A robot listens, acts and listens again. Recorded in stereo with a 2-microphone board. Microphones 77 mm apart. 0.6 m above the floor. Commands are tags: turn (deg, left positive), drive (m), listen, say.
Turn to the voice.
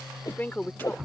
<turn deg="25"/>
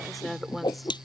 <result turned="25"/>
<say>Found it: a woman speaking, straight ahead.</say>